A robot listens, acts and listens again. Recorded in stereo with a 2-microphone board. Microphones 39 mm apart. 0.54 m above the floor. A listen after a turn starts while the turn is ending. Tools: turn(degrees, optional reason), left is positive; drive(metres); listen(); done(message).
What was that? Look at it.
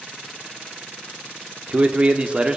turn(degrees=-25, reason="The man speaking: about 25° right or 155° right.")
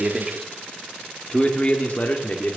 turn(degrees=45, reason="So it is at 45° left.")
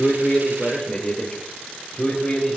turn(degrees=20, reason="The man speaking is now 20° left.")
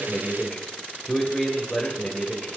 turn(degrees=10, reason="The man speaking is now 10° left.")
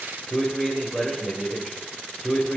done("Facing the man speaking, 2 to 4 m away.")